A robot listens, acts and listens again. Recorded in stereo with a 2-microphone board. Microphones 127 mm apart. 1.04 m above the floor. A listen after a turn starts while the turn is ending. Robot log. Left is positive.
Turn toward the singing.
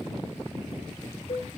cmd idle
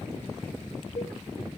cmd idle
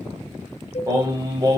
note: The singing: about 35° right or 145° right.
cmd yaw -35
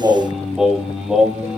note: So it is at 10° right.
cmd yaw -10
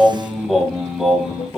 end: Found it: singing, straight ahead.